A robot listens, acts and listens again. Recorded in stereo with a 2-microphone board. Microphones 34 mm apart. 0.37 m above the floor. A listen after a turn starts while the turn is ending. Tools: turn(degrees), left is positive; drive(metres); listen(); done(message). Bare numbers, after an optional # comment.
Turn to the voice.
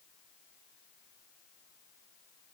listen()
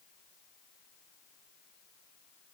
listen()
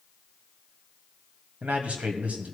# The man speaking: about 50° right or 130° right.
turn(-50)
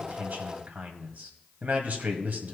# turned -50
# So it is at 75° right.
turn(-75)
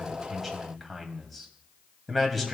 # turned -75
done("Found it: a man speaking, straight ahead.")